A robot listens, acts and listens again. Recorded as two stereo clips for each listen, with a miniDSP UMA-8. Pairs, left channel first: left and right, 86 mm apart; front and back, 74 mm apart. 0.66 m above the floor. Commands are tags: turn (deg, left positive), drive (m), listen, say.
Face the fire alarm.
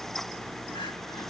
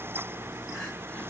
<listen/>
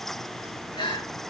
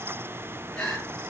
<listen/>
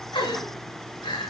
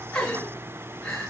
<say>I can't make out a fire alarm, only crying.</say>